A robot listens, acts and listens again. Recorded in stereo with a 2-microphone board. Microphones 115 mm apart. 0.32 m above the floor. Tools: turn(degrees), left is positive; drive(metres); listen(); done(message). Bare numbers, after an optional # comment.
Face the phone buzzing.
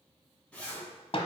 listen()
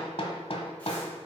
listen()
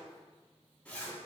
done("I can't make out a phone buzzing, only a zipper and hammering.")